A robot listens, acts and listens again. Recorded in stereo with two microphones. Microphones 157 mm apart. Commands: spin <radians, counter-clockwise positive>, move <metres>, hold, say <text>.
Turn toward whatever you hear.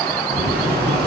spin -1.57
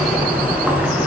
spin -0.17
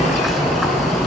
say Facing the boiling, over 4 m away.